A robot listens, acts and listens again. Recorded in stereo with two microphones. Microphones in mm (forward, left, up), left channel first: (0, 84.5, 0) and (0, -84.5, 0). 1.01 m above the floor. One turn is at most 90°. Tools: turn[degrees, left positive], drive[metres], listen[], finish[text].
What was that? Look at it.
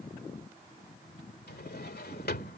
Action: turn[90]
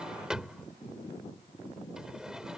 Action: finish[Facing the drawer.]